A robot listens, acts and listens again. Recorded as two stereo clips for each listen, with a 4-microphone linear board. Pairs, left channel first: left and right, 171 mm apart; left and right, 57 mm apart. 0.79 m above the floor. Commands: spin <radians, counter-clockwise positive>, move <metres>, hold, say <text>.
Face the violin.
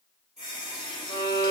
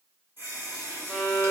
spin 0.44
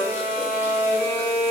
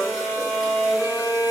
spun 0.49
spin 2.18
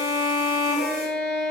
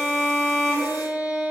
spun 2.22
say Found it: a violin, straight ahead, 2 to 4 m away.